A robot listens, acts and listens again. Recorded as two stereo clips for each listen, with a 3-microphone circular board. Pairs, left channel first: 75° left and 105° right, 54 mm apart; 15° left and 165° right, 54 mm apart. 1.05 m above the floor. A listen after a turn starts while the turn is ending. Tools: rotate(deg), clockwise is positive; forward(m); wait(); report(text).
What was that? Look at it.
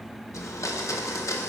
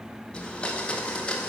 rotate(-85)
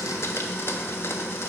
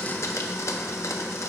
rotate(-35)
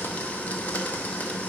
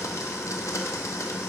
rotate(-15)
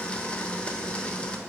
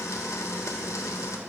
report("Facing the blender.")